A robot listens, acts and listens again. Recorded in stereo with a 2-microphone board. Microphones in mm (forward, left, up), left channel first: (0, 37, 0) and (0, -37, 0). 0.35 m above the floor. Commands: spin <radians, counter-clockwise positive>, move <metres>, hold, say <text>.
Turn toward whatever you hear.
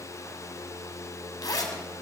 spin 0.96
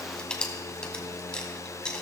spin 0.26
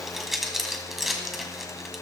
say Found it: a zipper, straight ahead.